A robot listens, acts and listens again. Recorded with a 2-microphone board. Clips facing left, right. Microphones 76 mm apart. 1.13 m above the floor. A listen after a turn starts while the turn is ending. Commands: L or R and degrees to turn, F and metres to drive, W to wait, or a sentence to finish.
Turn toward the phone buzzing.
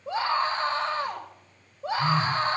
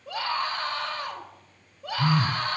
R60
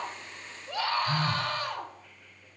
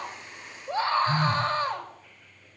R10
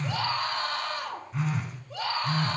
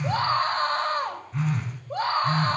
Found it: a phone buzzing, straight ahead.